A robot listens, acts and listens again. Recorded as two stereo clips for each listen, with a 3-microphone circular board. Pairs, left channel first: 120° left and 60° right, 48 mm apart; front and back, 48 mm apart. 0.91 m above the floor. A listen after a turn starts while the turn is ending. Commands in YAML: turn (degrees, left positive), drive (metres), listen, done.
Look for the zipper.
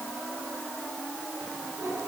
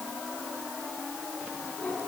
listen: true
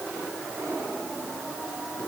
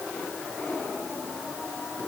listen: true
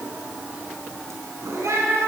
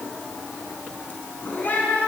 done: "I can't make out a zipper, only a cat meowing."